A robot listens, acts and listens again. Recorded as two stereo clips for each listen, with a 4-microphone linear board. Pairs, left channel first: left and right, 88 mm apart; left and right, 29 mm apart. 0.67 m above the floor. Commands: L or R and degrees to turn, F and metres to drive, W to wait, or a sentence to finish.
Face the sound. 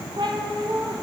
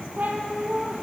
R65
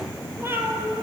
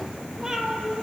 R20
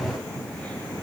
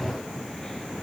W
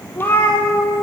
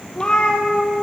L35
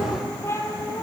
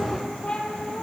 L35
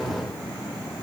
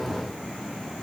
W
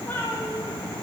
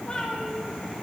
L20
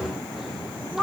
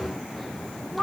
Found it: a cat meowing, straight ahead, 2 to 4 m away.